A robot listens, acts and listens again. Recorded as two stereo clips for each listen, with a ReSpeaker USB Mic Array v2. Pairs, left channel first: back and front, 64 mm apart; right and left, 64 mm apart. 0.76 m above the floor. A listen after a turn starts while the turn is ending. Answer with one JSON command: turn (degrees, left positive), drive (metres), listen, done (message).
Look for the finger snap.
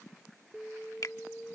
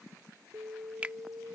{"turn": 160}
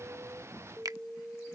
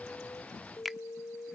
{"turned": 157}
{"done": "Found it: a finger snap, straight ahead."}